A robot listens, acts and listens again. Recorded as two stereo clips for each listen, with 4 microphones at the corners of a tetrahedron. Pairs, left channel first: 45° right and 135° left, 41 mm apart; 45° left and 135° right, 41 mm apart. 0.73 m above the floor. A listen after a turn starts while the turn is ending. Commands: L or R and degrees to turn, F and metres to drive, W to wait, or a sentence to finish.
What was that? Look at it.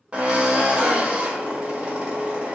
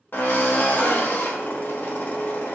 L75
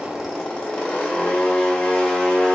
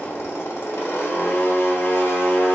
L25
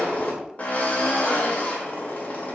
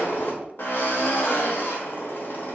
L10
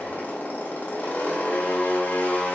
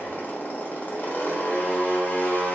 Facing the drill.